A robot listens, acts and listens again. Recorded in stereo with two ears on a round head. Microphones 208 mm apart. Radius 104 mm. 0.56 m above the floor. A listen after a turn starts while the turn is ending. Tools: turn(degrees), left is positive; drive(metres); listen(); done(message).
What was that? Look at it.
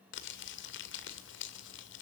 turn(degrees=55)
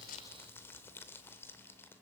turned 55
turn(degrees=10)
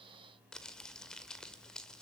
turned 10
done("Found it: crumpling, straight ahead, 2 to 4 m away.")